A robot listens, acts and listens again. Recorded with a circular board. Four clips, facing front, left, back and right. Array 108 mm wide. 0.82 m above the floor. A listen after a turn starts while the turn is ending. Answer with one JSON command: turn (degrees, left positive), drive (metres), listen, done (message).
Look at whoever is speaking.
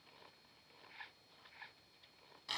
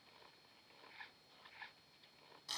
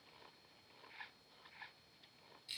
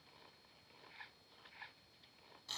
{"listen": true}
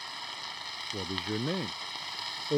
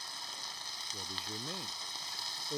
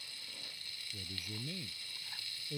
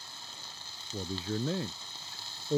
{"turn": -35}
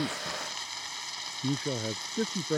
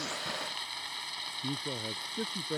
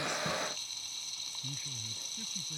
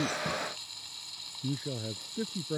{"done": "Found it: a man speaking, straight ahead."}